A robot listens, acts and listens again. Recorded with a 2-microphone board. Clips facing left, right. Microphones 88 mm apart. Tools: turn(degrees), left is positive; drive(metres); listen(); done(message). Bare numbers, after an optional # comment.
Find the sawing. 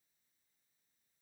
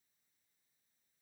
listen()
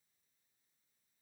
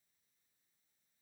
listen()
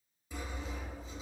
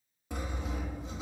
# The sawing: about 65° right or 115° right.
turn(-65)
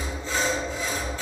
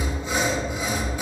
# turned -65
# So it is at 15° right.
turn(-15)
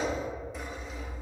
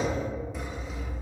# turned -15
done("Found it: sawing, straight ahead.")